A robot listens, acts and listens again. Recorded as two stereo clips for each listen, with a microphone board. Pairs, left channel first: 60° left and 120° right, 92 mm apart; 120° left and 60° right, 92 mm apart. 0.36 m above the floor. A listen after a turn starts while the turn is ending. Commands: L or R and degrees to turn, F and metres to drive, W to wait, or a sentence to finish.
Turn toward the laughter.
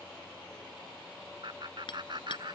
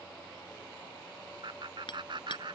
R90
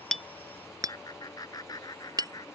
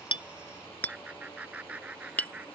L15
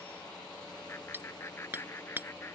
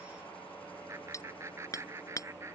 Facing the laughter.